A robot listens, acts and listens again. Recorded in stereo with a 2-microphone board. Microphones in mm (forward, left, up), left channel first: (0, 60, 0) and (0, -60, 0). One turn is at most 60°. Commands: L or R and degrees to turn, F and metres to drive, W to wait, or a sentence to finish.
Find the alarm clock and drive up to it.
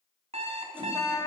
R60
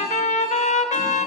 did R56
W
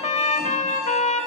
W
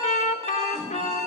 R60
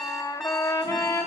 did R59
F1.0
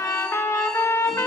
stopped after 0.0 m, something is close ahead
W
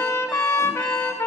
W
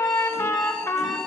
Something is in my way. I am facing the alarm clock but have not reached it.